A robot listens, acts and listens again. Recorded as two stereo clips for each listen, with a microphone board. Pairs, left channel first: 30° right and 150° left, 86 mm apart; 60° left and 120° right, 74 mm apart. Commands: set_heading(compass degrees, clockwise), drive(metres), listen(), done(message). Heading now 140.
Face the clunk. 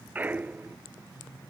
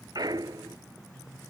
set_heading(280)
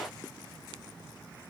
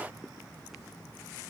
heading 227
set_heading(282)
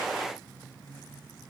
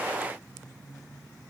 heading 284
done("I heard a clunk from this way, but can't make it out now.")